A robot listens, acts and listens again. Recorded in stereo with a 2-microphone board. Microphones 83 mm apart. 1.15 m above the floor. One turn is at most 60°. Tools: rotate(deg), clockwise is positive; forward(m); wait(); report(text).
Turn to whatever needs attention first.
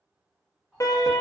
rotate(-40)
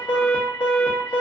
rotate(-60)
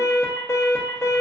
rotate(-35)
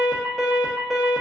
report("Facing the alarm.")